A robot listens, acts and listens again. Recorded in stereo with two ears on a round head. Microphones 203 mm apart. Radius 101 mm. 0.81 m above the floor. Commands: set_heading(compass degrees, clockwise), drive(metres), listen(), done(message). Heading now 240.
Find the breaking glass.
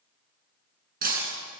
set_heading(280)
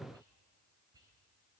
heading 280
listen()
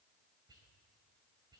done("I heard breaking glass, but can't make it out now. It was about straight ahead or 100° right.")